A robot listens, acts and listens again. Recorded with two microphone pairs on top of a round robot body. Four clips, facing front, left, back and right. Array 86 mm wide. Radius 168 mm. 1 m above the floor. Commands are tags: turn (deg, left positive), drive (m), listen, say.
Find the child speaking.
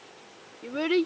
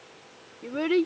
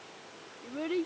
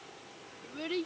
<turn deg="45"/>
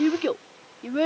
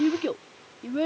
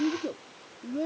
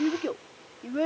<turn deg="-10"/>
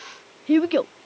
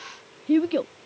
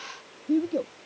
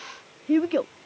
<turn deg="-15"/>
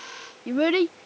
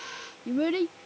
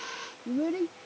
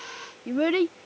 <turn deg="-25"/>
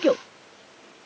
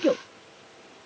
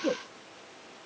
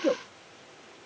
<say>Found it: a child speaking, straight ahead.</say>